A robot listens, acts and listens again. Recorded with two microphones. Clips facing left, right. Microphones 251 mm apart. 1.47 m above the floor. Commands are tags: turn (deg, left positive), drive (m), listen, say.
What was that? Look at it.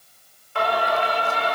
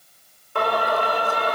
<turn deg="-55"/>
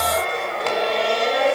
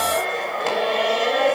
<say>Facing the singing.</say>